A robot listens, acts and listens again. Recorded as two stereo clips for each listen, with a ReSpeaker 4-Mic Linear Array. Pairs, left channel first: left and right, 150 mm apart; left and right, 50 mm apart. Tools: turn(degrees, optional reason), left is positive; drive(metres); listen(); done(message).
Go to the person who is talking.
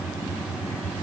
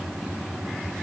listen()
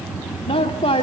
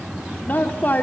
turn(degrees=40, reason="The woman speaking: about 40° left or 140° left.")
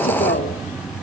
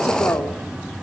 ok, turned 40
listen()
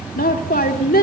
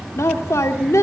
turn(degrees=100, reason="So it is at 100° left.")
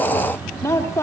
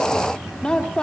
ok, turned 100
turn(degrees=20, reason="The woman speaking is now 20° left.")
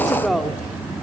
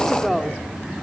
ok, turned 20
drive(metres=1.0)
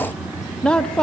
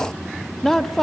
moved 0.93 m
drive(metres=1.0)
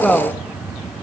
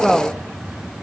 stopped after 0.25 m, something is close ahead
done("Arrived at the woman speaking, straight ahead.")